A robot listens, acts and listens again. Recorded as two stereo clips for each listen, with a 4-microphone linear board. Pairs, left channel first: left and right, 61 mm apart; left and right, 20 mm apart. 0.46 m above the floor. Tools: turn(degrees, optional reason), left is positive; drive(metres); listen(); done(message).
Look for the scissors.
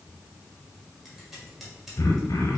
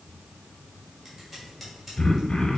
turn(degrees=-30)
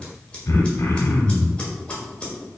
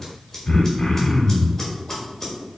turn(degrees=25, reason="So it is at 25° left.")
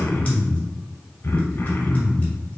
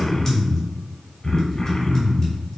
listen()
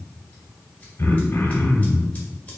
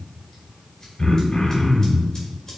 listen()
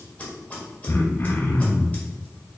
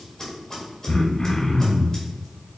turn(degrees=30, reason="The scissors is now 30° left.")
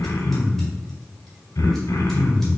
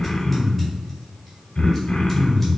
listen()
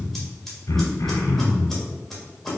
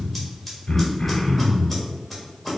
done("Facing the scissors.")